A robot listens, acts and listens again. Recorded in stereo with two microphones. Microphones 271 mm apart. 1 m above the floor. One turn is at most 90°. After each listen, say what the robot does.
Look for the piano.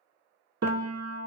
Turn 65° right.
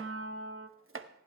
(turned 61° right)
Turn 55° right.
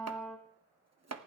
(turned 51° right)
Facing the piano, under 1 m away.